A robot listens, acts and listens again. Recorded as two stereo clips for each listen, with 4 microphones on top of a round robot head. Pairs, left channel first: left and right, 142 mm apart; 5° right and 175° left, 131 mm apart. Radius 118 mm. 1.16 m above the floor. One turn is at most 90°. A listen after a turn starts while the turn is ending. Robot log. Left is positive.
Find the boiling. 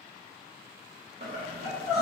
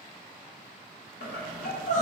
note: The boiling: 35° right.
cmd yaw -35
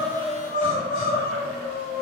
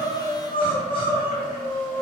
cmd idle
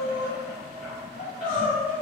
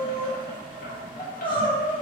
end: Found it: boiling, straight ahead, under 1 m away.